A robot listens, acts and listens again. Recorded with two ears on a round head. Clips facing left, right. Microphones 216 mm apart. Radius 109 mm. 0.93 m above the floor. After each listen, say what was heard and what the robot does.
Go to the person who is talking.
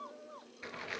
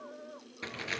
Keep listening.
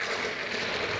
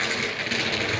Keep listening.
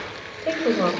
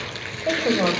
Turn 30° left.
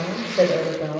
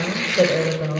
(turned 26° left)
So it is at 15° right. Turn 15° right.
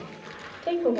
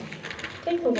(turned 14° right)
Drive 1.0 m forward.
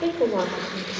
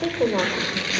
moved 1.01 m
Drive 1.0 m forward.
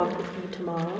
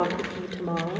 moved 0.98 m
Drive 1.0 m forward.
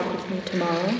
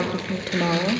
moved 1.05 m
Drive 1.0 m forward.
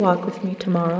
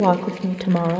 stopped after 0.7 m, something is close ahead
The woman speaking is now 10° left. Turn 10° left.
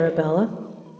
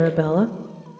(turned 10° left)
I am next to the woman speaking.